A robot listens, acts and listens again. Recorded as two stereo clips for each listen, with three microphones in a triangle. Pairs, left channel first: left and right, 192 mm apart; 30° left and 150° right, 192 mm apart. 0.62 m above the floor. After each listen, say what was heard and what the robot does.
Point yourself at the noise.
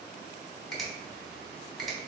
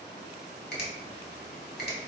Found it: a finger snap, straight ahead, 1 to 2 m away.